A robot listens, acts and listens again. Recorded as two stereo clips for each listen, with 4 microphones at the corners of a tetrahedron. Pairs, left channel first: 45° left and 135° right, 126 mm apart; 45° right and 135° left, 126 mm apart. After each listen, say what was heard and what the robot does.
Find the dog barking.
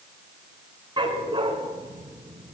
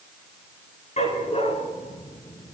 The dog barking: 80° right. Turn 80° right.
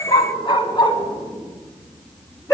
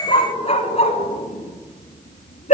The dog barking is now 20° right. Turn 20° right.
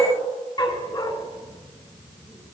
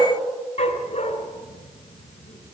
The dog barking is now 10° right. Turn 10° right.
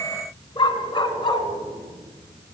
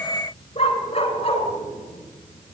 Facing the dog barking, 2 to 4 m away.